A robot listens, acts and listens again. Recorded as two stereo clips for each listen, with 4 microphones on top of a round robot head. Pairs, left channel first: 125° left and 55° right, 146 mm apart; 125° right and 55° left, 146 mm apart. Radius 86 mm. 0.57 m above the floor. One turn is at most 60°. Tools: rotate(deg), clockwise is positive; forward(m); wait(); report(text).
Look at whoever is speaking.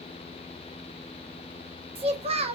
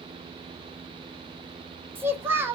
rotate(15)
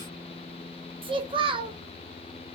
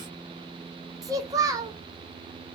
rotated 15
report("Facing the child speaking, 1 to 2 m away.")